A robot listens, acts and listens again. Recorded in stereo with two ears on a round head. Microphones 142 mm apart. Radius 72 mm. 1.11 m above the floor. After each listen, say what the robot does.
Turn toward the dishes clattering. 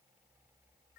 Keep listening.
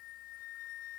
Keep listening.
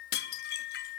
Turn 65° left.
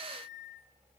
Turn 10° left.
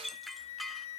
Facing the dishes clattering.